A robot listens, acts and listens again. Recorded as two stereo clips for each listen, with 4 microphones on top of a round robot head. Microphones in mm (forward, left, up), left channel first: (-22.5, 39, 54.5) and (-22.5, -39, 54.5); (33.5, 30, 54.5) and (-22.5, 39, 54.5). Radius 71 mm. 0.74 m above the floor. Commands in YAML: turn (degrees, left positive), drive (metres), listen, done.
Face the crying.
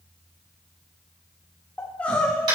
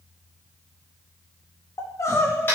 turn: 15
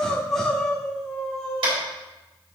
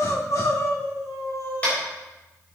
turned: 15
done: "Facing the crying."